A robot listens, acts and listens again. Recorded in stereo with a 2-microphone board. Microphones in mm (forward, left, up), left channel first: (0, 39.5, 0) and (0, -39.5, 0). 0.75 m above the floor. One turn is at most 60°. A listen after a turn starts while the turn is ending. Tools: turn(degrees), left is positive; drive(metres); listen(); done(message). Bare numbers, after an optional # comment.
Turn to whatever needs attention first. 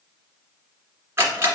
listen()
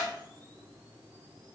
listen()
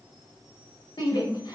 # The shout: about 70° left or 110° left.
turn(60)
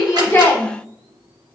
# So it is at 25° left.
turn(25)
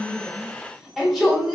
done("Facing the shout, 1 to 2 m away.")